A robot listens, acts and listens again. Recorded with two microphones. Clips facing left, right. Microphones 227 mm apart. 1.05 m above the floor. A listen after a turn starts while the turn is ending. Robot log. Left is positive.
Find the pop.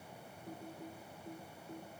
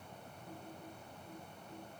cmd idle
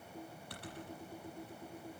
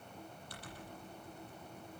cmd idle
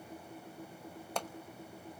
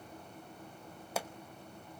cmd yaw -30
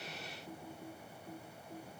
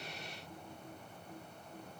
cmd idle
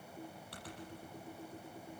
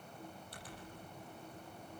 end: I heard a pop, but can't make it out now. It was about 25° left or 145° right.